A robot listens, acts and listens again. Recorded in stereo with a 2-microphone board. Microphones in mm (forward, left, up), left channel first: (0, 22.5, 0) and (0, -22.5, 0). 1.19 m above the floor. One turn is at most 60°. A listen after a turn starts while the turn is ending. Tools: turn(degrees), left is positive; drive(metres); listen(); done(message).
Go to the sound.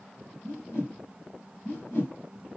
turn(degrees=60)
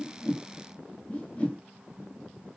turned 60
turn(degrees=30)
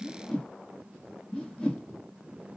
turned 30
turn(degrees=20)
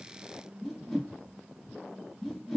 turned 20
drive(metres=1.0)
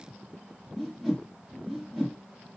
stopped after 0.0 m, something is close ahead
done("Something is in my way. I am facing the whoosh but have not reached it.")